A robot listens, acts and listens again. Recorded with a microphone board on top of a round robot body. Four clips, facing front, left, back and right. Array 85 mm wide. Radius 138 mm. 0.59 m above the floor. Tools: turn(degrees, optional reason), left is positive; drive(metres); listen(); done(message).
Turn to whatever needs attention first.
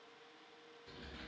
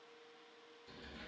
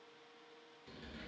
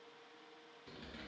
listen()
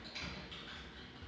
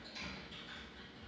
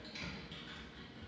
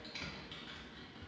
listen()
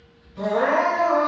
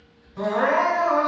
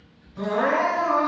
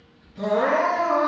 turn(degrees=100, reason="The crying: 100° left.")
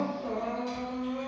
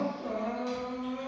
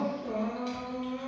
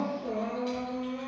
turn(degrees=35, reason="The crying is now 35° left.")
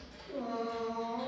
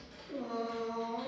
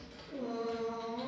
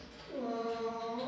done("Found it: crying, straight ahead.")